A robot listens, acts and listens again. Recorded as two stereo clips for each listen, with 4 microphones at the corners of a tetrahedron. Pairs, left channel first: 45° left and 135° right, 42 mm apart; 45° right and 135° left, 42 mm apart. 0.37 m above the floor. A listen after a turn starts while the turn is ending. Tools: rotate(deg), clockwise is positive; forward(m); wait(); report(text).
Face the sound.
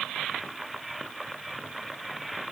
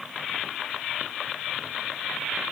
wait()
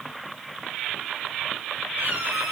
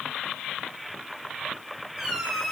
rotate(145)
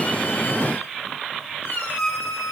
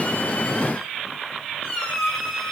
rotate(-25)
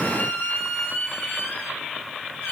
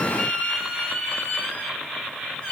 rotate(-20)
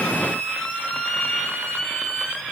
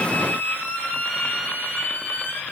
report("Found it: a squeak, straight ahead.")